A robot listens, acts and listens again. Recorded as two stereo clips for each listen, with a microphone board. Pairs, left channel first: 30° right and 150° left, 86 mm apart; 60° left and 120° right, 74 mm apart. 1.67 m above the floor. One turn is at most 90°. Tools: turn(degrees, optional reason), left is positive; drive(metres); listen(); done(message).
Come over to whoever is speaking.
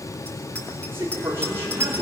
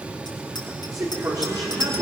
turn(degrees=-90, reason="The man speaking: 150° right.")
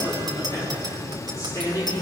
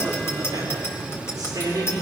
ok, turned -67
turn(degrees=-80, reason="The man speaking is now 80° right.")
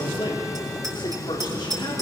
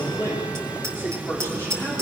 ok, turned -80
drive(metres=1.0)
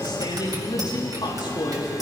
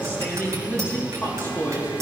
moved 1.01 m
drive(metres=1.0)
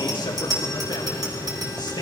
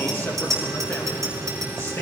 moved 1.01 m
listen()
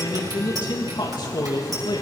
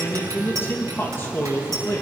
drive(metres=1.0)
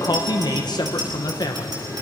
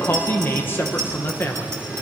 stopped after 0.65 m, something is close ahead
done("I am next to the man speaking.")